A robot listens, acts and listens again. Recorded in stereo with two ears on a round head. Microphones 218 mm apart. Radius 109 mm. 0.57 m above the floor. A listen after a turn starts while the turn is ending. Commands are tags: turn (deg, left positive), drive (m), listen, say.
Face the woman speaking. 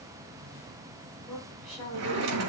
<turn deg="30"/>
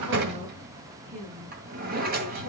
<turn deg="-30"/>
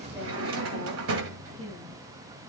<turn deg="-10"/>
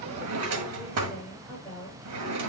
<say>Found it: a woman speaking, straight ahead.</say>